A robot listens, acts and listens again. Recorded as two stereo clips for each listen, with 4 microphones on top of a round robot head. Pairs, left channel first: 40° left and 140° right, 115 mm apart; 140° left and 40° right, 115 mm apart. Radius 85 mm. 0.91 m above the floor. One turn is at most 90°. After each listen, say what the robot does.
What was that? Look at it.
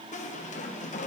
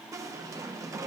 Turn 25° left.
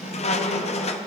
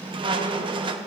Turn 10° left.
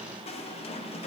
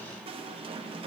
Facing the squeak.